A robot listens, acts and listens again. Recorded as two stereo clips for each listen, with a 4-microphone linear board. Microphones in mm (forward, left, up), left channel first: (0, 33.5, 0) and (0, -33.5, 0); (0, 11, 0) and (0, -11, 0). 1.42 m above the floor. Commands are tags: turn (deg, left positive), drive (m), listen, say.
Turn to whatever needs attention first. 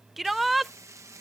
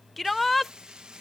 <turn deg="30"/>
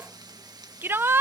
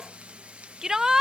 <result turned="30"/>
<turn deg="-35"/>
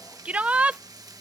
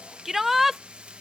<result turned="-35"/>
<turn deg="-20"/>
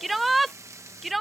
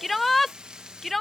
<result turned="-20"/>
<say>Found it: a shout, straight ahead.</say>